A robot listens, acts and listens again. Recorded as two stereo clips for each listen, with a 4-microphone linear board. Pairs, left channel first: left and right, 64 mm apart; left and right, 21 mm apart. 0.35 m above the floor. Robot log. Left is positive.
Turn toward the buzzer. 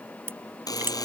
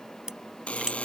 cmd yaw +90
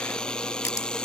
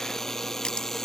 note: So it is at 15° left.
cmd yaw +15
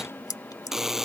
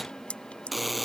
end: Facing the buzzer.